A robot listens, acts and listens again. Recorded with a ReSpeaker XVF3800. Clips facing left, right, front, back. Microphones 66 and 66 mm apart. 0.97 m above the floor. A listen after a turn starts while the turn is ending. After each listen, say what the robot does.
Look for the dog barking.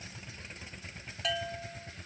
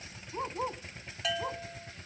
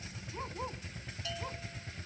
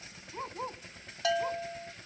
Turn 100° right.
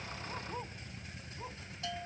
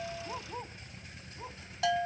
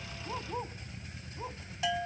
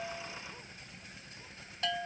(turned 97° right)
Keep listening.
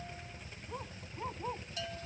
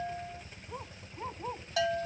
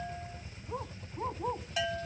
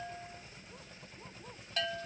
Facing the dog barking.